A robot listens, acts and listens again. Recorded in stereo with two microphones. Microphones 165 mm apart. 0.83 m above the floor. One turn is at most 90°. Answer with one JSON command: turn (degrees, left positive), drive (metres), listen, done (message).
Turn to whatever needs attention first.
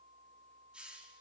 {"listen": true}
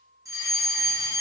{"turn": -20}
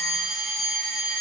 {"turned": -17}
{"done": "Found it: a fire alarm, straight ahead, 2 to 4 m away."}